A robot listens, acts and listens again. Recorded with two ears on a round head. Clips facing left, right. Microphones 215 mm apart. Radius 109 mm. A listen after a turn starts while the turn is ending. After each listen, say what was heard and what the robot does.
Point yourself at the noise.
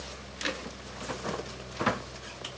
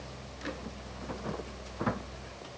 Keep listening.
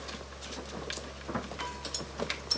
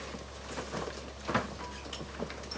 Keep listening.
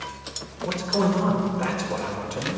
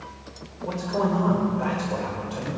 The man speaking: about 35° left or 145° left. Turn 35° left.
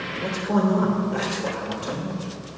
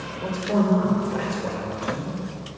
Facing the man speaking, 2 to 4 m away.